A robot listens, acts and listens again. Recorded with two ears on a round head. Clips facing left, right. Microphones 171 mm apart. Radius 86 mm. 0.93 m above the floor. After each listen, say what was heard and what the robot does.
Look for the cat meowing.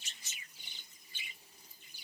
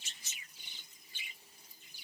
Keep listening.
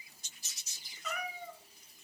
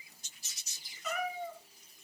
Turn 30° left.
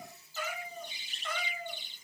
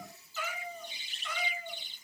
So it is at 135° left. Turn 135° left.
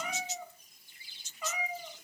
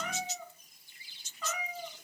The cat meowing is now 10° left. Turn 10° left.
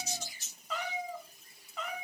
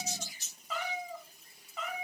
Found it: a cat meowing, straight ahead, 2 to 4 m away.